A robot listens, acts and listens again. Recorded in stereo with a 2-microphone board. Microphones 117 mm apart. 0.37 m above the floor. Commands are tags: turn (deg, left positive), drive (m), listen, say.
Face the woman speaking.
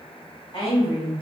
<turn deg="45"/>
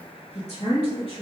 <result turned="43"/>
<turn deg="115"/>
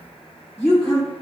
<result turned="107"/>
<turn deg="10"/>
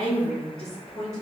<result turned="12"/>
<say>Facing the woman speaking.</say>